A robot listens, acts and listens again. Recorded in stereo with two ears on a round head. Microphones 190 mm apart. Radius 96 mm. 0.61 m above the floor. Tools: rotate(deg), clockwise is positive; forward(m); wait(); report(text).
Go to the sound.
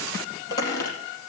rotate(-15)
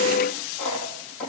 forward(1.0)
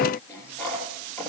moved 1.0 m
rotate(-10)
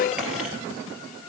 forward(1.0)
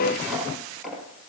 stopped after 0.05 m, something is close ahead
report("Blocked. The squeak is further on, straight ahead.")